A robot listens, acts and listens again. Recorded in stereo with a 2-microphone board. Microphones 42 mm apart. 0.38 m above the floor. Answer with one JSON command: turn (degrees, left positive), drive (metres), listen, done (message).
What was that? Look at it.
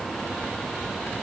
{"listen": true}
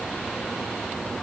{"listen": true}
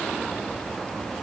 {"done": "I can't make out anything."}